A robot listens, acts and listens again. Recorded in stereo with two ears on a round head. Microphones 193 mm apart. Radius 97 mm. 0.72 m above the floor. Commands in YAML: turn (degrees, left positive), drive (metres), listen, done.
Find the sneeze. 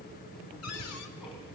listen: true
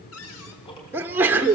turn: -30
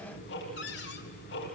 listen: true
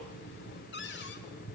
done: "I heard a sneeze, but can't make it out now. It was about 20° left or 140° right."